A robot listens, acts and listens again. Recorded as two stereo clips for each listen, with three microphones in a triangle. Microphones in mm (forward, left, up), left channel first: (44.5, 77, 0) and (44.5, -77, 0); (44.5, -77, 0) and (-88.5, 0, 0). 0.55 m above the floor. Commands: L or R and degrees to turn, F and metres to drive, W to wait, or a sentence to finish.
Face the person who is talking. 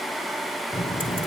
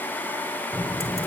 L50
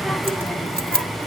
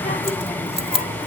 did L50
Found it: a child speaking, straight ahead, 1 to 2 m away.